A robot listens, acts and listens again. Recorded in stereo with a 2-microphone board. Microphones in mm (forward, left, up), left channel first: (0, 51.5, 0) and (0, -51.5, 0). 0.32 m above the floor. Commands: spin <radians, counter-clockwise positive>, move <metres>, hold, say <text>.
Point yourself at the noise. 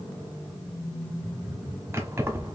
spin -0.44
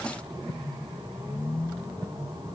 hold
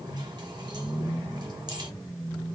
hold
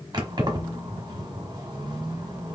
spin -2.27
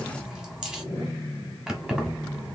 say Found it: keys jangling, straight ahead, 1 to 2 m away.